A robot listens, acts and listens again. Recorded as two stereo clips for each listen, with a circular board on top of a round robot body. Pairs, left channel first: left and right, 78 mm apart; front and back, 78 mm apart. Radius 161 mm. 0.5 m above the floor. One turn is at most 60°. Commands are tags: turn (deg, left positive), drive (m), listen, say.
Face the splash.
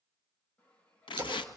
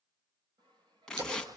<turn deg="-60"/>
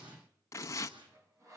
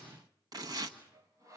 <turn deg="-60"/>
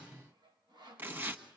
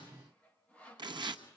<turn deg="-25"/>
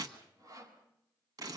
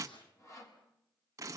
<say>Facing where the splash came from. I can't hear it now.</say>